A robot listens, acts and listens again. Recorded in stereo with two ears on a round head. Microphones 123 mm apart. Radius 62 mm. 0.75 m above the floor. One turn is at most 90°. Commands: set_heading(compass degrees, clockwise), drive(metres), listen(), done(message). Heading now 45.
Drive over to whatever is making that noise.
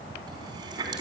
set_heading(75)
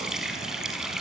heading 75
drive(1.0)
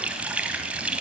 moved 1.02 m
set_heading(85)
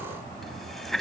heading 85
drive(1.0)
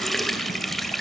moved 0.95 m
drive(1.0)
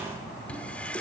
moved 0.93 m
set_heading(75)
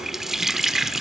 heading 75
drive(1.0)
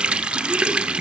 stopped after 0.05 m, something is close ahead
set_heading(85)
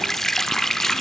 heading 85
done("Arrived at the running tap, straight ahead.")